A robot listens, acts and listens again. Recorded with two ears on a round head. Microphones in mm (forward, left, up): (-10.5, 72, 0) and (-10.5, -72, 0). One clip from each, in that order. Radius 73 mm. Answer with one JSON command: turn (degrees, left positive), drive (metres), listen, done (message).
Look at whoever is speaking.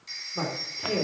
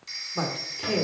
{"turn": -25}
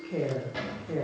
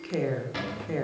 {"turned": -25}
{"turn": -130}
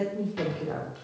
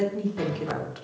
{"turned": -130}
{"turn": -40}
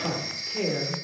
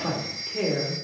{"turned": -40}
{"done": "Facing the woman speaking, 2 to 4 m away."}